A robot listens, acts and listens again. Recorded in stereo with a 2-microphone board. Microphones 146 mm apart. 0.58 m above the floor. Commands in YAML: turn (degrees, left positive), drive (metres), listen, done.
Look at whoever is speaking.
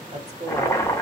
turn: -45
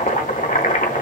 listen: true
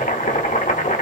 listen: true
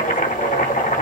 done: "I heard a woman speaking, but can't make it out now. It was about straight ahead or 90° right."